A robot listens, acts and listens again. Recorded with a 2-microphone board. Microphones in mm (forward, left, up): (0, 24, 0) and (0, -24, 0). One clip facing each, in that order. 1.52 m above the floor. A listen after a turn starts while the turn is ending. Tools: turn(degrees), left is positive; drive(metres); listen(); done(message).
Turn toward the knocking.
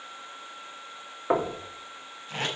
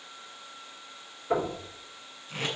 turn(degrees=90)
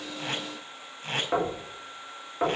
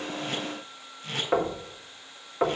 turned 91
turn(degrees=-10)
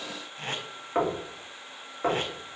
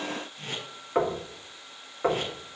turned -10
done("Facing the knocking.")